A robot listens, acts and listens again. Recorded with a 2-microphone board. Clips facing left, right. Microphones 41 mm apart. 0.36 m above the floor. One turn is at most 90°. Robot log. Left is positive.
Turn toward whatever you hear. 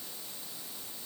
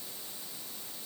cmd idle
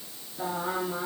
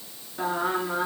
note: The singing: about 60° right or 120° right.
cmd yaw -60
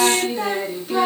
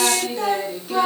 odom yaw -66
end: Found it: singing, straight ahead.